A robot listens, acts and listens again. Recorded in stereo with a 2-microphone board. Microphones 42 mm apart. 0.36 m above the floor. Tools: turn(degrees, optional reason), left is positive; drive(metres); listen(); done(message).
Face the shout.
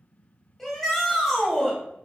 turn(degrees=30)
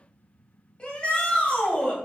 turn(degrees=140, reason="So it is at 140° left.")
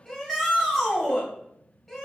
done("Found it: a shout, straight ahead.")